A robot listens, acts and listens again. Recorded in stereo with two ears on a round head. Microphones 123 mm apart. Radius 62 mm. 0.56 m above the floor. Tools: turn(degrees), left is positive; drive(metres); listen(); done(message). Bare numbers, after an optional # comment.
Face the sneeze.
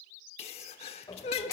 # The sneeze: about 45° left or 135° left.
turn(45)
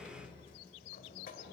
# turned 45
listen()
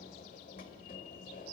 done("I heard a sneeze, but can't make it out now. It was about straight ahead or 90° left.")